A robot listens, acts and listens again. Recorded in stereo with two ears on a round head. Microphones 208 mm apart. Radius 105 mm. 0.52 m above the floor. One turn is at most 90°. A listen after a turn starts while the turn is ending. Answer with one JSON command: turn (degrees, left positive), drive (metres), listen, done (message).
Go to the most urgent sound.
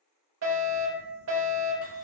{"turn": -55}
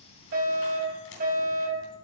{"turn": -50}
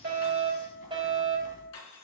{"turn": -25}
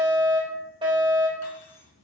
{"turn": -25}
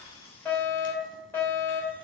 {"turn": 10}
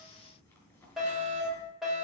{"drive": 1.0}
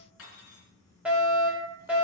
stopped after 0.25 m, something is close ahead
{"done": "Blocked. The fire alarm is further on, straight ahead."}